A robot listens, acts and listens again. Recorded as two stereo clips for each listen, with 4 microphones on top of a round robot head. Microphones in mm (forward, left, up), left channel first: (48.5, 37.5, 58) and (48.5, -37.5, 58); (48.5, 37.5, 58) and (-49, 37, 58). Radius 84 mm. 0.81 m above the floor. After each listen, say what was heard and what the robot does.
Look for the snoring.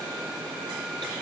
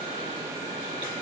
Keep listening.
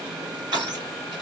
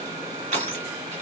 Keep listening.
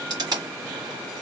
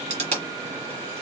I can't make out snoring to turn to.